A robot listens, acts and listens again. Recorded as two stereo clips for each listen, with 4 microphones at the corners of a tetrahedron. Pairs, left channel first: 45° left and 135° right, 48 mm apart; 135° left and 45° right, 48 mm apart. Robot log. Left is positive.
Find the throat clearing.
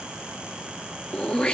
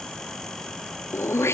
note: The throat clearing: 115° left.
cmd yaw +115
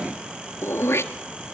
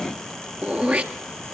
note: The throat clearing is now 15° left.
cmd yaw +15
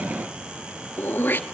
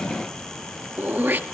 end: Found it: throat clearing, straight ahead, 1 to 2 m away.